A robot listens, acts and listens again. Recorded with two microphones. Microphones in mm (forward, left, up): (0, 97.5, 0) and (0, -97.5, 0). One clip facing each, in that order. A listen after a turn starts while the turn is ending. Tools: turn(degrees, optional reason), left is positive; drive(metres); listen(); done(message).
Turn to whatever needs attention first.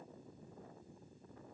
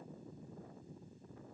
listen()
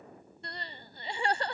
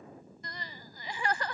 turn(degrees=30, reason="The crying: about 30° left or 150° left.")
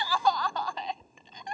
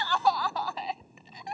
done("Facing the crying.")